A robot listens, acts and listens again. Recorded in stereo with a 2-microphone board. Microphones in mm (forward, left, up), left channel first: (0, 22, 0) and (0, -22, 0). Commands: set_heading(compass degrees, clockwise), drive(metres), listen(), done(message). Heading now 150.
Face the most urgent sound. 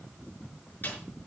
listen()
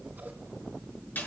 listen()
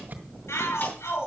set_heading(60)
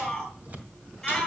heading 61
set_heading(51)
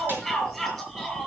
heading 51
done("Facing the shout, over 4 m away.")